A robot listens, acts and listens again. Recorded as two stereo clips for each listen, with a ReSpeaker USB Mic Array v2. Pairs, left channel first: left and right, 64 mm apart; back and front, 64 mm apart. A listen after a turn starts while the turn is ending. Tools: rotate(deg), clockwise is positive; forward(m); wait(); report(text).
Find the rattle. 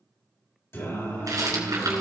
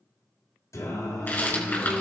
rotate(115)
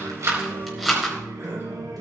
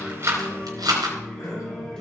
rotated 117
report("Found it: a rattle, straight ahead.")